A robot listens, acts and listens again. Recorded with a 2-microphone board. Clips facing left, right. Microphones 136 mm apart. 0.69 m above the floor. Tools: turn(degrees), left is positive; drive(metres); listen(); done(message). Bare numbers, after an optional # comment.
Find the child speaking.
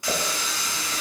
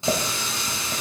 listen()
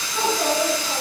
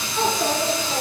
turn(30)
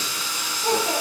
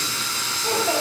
# So it is at 130° left.
turn(130)
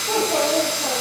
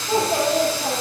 # The child speaking is now 50° left.
turn(50)
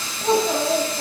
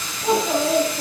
done("Facing the child speaking.")